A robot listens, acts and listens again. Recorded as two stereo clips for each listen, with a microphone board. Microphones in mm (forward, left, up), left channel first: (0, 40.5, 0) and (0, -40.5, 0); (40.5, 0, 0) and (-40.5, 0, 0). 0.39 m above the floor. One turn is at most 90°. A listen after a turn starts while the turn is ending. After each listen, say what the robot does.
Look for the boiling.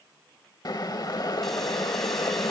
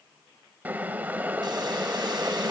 Turn 90° left.
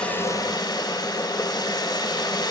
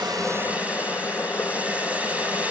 Turn 50° left.
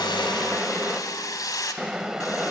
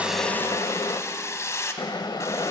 Turn 10° right.
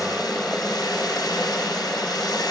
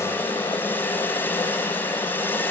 Found it: boiling, straight ahead.